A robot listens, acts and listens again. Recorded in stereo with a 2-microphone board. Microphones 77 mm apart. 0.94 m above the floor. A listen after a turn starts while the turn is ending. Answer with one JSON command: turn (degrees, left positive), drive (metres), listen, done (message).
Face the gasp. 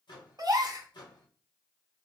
{"turn": -55}
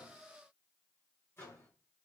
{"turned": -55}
{"listen": true}
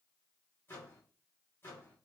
{"done": "I heard a gasp, but can't make it out now. It was about straight ahead or 70° right."}